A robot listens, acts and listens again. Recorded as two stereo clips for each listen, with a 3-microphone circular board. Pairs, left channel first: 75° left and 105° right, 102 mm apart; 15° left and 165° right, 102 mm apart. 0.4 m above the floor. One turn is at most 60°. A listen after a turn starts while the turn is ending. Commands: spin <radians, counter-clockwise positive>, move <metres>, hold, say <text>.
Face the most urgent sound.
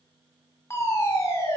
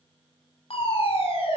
spin 0.35
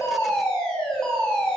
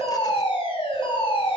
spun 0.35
say Facing the fire alarm.